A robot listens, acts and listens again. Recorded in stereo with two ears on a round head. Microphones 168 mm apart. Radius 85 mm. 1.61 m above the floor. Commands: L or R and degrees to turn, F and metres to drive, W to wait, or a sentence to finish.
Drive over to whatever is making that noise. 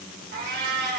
R60
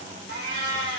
R60
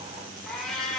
F1.0
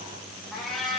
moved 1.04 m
F1.0
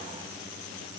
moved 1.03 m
W
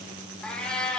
F1.0
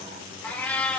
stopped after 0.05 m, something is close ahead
L10
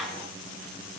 I am next to the cat meowing.